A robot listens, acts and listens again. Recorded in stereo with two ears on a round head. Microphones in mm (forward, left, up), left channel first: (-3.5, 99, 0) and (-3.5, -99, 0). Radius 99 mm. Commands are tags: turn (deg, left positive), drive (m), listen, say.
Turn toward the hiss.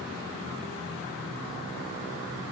<listen/>
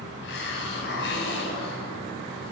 <turn deg="55"/>
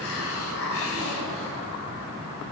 <turn deg="70"/>
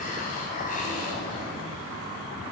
<turn deg="40"/>
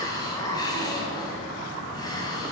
<turn deg="20"/>
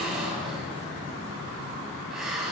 <say>Facing the hiss.</say>